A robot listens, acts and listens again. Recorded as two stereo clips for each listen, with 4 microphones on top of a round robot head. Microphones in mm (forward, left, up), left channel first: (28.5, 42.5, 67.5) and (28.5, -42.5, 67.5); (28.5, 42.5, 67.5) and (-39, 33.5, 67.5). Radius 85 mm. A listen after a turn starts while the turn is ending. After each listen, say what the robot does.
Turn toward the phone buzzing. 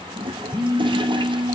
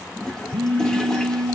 Turn 140° right.
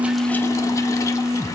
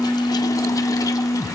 Turn 25° right.
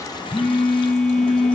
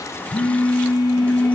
Turn 10° left.
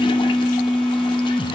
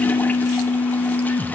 Found it: a phone buzzing, straight ahead, 2 to 4 m away.